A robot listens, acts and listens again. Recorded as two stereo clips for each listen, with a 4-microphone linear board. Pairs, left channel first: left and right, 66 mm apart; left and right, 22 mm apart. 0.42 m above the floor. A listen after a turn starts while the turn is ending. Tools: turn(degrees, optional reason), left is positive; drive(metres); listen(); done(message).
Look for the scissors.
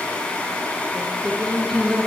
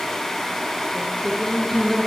listen()
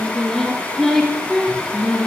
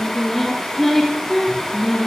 listen()
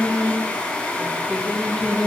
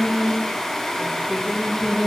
done("I can't make out scissors, only singing.")